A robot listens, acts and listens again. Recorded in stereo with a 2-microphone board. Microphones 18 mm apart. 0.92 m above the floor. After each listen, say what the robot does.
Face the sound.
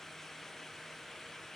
Keep listening.
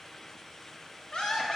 Turn 70° left.
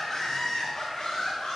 Turn 35° left.
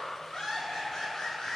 Turn 25° left.
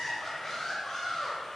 Turn 10° left.
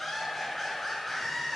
Found it: laughter, straight ahead.